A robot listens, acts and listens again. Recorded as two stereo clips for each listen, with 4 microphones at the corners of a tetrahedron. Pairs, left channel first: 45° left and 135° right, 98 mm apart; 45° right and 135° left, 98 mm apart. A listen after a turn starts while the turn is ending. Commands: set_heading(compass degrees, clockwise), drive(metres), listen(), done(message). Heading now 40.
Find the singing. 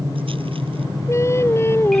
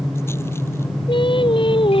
set_heading(60)
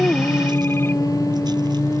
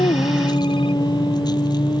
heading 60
set_heading(70)
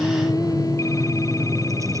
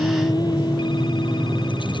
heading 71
listen()
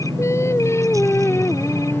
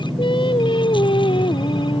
set_heading(91)
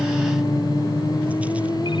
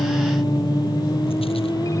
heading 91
listen()
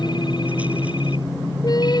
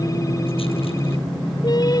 done("Found it: singing, straight ahead.")